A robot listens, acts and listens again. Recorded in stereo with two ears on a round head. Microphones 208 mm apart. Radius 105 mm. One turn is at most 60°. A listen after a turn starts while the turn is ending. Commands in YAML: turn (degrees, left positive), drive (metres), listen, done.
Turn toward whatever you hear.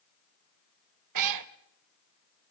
turn: -60
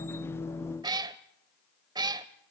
turn: -15
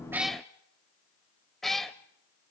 done: "Found it: a cat meowing, straight ahead, under 1 m away."